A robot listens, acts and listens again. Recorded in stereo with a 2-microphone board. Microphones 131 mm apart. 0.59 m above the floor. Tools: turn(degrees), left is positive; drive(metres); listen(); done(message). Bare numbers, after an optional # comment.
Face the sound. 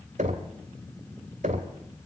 # The knocking: about 70° right or 110° right.
turn(-70)
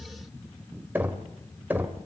# So it is at 15° right.
turn(-15)
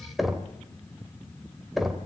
done("Facing the knocking.")